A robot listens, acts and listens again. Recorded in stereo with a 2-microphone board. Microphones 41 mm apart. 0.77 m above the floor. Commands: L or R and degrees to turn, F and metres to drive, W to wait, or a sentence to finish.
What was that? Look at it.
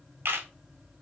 R75
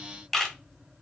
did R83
Found it: a camera shutter, straight ahead.